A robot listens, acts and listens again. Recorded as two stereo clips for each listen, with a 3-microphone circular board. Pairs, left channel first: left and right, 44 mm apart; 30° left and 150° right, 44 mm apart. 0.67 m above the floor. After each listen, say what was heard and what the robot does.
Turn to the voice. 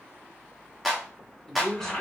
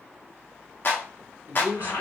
The man speaking: 165° left. Turn 165° left.
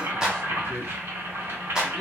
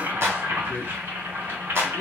Found it: a man speaking, straight ahead, 1 to 2 m away.